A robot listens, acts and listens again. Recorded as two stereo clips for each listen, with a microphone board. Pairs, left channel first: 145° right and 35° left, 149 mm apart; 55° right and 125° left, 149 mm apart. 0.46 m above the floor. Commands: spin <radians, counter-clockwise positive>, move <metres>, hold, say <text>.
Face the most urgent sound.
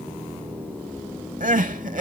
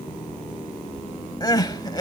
say Found it: crying, straight ahead, under 1 m away.